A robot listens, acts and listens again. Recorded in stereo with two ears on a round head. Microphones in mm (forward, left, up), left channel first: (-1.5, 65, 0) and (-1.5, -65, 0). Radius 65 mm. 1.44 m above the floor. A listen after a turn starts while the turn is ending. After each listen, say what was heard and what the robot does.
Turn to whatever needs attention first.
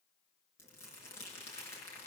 Keep listening.
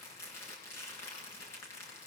Keep listening.
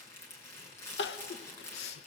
Turn 90° left.
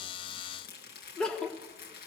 Facing the crying, 1 to 2 m away.